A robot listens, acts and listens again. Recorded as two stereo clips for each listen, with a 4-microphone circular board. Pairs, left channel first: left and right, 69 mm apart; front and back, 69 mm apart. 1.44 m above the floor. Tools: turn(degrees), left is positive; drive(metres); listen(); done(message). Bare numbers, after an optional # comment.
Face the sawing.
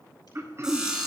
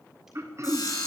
# The sawing: 10° right.
turn(-10)
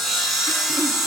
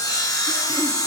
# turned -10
done("Facing the sawing.")